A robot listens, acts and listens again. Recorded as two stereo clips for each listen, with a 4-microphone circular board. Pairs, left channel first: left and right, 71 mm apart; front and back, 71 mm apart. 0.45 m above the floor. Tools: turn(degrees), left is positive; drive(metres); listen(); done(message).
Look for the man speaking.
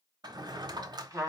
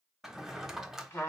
listen()
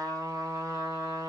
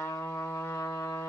listen()
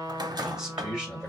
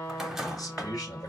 turn(degrees=-15)
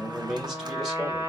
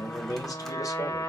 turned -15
done("Facing the man speaking.")